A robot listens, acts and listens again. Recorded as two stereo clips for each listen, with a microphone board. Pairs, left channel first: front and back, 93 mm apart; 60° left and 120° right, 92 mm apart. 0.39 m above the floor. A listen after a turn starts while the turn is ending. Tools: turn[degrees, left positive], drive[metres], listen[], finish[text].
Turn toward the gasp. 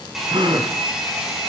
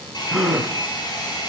Thought: The gasp: 155° left.
Action: turn[155]
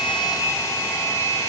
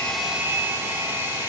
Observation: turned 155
Action: finish[I heard a gasp from this way, but can't make it out now.]